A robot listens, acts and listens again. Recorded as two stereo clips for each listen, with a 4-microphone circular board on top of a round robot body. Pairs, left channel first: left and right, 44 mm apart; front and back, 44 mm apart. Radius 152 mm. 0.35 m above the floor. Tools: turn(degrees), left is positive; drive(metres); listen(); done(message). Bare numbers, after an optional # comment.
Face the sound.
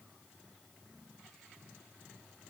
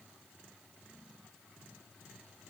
listen()
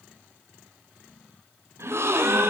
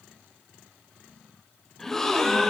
# The gasp: 80° right.
turn(-80)
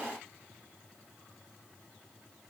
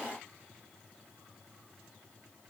done("Facing where the gasp came from. I can't hear it now.")